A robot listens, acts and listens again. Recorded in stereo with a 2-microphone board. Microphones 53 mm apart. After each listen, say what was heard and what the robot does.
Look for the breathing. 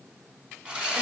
Keep listening.
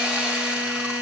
Keep listening.
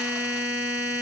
I can't make out breathing, only a buzzer and sawing.